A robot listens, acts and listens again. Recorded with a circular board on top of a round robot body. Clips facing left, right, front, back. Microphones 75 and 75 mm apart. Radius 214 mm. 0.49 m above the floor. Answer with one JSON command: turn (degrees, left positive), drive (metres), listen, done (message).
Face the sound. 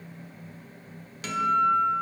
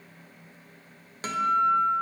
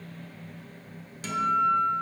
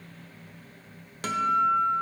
{"turn": -145}
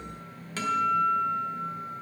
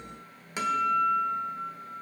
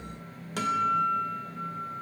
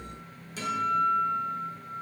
{"turn": -15}
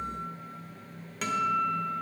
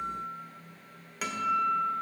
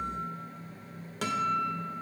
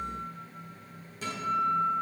{"done": "Found it: a guitar, straight ahead."}